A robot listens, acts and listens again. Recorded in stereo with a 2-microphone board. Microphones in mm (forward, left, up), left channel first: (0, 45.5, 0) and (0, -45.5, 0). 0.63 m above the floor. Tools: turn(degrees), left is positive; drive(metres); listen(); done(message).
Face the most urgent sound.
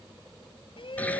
turn(degrees=70)
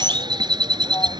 listen()
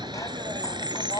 turn(degrees=40)
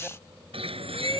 listen()
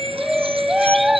done("Facing the shout.")